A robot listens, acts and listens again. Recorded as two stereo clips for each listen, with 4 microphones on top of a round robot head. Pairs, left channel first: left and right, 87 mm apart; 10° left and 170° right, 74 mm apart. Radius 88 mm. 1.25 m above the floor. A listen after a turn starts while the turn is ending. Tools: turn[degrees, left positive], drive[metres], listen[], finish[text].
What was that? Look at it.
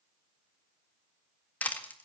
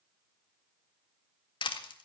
Thought: The crushing: 15° left.
Action: turn[15]
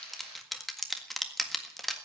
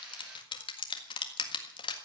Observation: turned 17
Action: finish[Facing the crushing, 1 to 2 m away.]